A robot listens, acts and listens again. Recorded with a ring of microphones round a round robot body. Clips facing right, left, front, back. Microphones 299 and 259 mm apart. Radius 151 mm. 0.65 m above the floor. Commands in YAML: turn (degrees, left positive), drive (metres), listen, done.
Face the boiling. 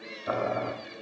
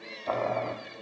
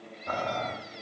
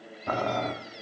turn: -165
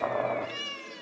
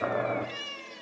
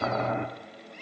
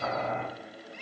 turn: 15
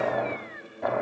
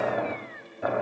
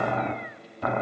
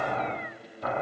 done: "Facing the boiling."